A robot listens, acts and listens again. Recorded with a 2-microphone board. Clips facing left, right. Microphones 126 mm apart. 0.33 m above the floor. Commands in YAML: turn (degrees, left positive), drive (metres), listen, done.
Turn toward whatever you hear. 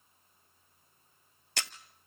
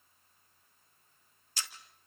turn: 70
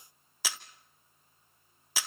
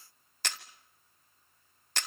done: "Facing the camera shutter, 1 to 2 m away."